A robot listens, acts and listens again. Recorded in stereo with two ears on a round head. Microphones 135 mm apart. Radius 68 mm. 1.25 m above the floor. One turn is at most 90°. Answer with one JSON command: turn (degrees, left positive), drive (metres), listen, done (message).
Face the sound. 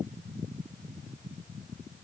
{"listen": true}
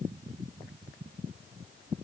{"listen": true}
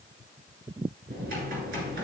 {"turn": -70}
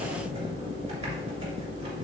{"turn": -40}
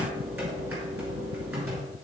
{"turn": -15}
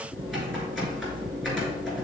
{"done": "Facing the typing on a keyboard, 2 to 4 m away."}